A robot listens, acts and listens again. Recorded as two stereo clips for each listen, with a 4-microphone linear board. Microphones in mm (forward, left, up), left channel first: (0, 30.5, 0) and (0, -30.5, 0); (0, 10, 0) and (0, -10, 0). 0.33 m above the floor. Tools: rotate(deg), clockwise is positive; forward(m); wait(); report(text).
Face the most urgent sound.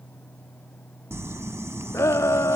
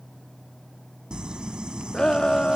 rotate(-50)
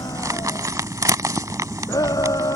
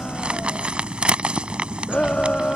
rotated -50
rotate(-80)
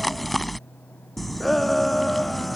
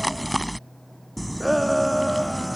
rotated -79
report("Facing the shout.")